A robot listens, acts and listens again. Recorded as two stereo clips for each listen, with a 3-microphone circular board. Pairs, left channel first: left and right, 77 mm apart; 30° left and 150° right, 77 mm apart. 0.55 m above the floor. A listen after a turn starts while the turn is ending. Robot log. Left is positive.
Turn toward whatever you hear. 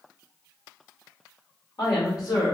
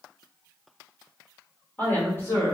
note: The woman speaking: 80° left.
cmd yaw +80
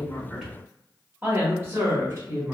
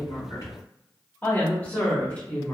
note: The woman speaking is now 40° right.
cmd yaw -40
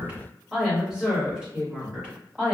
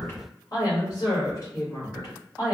note: The woman speaking is now 15° right.
cmd yaw -15
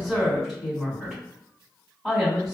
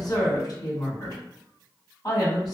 end: Found it: a woman speaking, straight ahead, 2 to 4 m away.